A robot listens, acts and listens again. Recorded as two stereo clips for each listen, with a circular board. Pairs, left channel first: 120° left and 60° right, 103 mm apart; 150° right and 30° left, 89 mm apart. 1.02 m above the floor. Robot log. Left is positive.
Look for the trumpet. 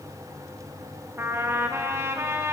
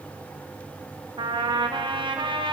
end: Facing the trumpet.